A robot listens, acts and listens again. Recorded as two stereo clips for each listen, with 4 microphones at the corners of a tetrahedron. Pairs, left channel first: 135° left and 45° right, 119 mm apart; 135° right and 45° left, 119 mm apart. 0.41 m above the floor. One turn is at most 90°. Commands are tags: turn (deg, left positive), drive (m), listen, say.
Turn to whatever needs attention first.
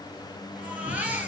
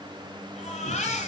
<turn deg="-90"/>
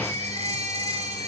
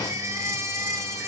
<turn deg="-20"/>
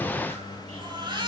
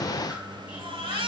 <say>Facing the baby crying, over 4 m away.</say>